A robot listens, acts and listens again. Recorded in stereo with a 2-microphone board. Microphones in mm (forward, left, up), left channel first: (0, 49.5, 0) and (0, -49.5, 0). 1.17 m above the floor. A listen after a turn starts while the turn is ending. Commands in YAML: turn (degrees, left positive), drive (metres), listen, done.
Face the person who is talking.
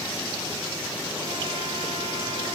listen: true
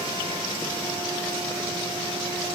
listen: true
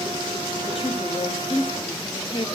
turn: 70
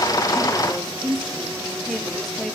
done: "Facing the woman speaking, 2 to 4 m away."